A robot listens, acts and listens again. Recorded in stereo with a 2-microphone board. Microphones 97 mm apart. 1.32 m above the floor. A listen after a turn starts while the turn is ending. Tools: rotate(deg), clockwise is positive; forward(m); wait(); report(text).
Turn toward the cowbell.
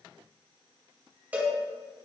rotate(15)
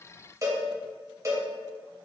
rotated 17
rotate(145)
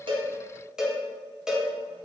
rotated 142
report("Found it: a cowbell, straight ahead.")